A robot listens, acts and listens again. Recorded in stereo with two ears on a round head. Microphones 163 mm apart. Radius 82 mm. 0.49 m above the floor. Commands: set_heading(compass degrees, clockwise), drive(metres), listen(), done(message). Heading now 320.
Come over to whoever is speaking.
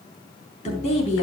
set_heading(280)
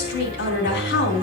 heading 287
set_heading(182)
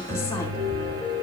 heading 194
set_heading(179)
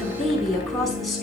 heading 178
drive(1.0)
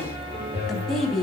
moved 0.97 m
drive(1.0)
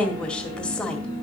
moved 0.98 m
drive(1.0)
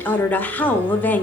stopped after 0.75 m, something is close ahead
set_heading(168)
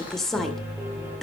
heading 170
done("Arrived at the woman speaking, straight ahead.")